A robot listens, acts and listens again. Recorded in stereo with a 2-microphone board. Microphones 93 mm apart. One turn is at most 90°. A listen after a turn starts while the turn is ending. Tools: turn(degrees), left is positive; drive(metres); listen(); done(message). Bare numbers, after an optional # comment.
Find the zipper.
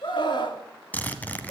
# The zipper: about 15° left or 165° left.
turn(15)
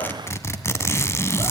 # So it is at 150° left.
turn(90)
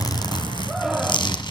# The zipper is now 100° left.
turn(90)
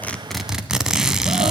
done("Found it: a zipper, straight ahead.")